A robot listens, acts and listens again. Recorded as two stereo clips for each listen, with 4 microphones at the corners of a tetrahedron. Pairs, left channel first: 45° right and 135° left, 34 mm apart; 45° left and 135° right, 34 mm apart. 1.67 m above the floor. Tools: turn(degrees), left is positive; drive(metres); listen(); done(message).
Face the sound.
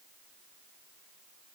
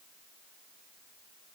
listen()
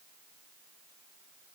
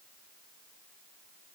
listen()
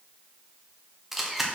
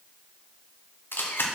turn(degrees=50)
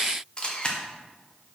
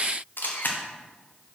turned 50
turn(degrees=15)
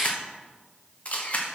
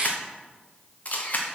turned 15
done("Found it: a camera shutter, straight ahead.")